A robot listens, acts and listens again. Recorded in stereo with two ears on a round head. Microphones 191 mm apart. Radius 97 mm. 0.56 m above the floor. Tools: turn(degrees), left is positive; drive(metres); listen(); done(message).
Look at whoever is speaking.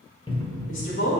turn(degrees=60)
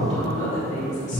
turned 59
turn(degrees=35)
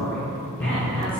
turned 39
done("Found it: a woman speaking, straight ahead, 2 to 4 m away.")